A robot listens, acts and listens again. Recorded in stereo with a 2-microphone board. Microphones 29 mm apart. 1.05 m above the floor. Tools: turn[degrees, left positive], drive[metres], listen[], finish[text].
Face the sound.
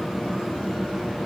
Action: listen[]
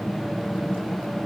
Action: listen[]
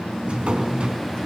Thought: The drawer: about 30° right or 150° right.
Action: turn[-30]
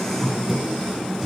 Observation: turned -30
Action: finish[Found it: a drawer, straight ahead.]